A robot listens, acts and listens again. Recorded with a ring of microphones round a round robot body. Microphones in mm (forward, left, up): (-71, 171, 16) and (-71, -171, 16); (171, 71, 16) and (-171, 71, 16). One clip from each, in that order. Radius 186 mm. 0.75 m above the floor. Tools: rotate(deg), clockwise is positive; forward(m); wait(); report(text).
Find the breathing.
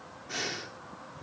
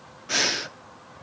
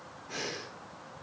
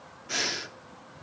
rotate(135)
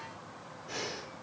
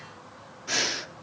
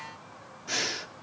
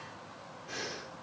rotate(55)
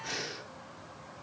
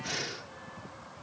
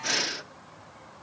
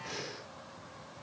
rotate(10)
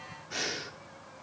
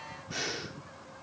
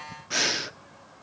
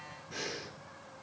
report("Facing the breathing, under 1 m away.")